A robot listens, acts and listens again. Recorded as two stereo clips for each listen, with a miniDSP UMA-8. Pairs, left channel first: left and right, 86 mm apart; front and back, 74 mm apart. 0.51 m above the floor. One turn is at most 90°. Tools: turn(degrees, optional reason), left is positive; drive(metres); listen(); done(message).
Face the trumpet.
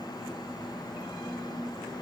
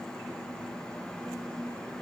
listen()
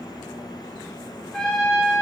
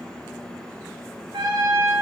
turn(degrees=90, reason="The trumpet: 175° left.")
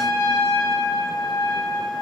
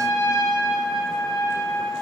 turn(degrees=55, reason="The trumpet is now 55° left.")
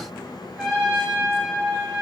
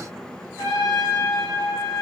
done("Found it: a trumpet, straight ahead, over 4 m away.")